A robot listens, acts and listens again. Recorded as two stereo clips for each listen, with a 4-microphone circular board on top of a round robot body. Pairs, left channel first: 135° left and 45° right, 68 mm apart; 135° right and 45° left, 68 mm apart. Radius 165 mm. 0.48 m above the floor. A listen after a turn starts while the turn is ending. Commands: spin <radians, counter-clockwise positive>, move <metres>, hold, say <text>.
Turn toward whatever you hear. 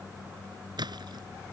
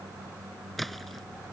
spin -0.79
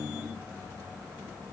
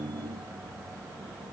say Facing where the splash came from. I can't hear it now.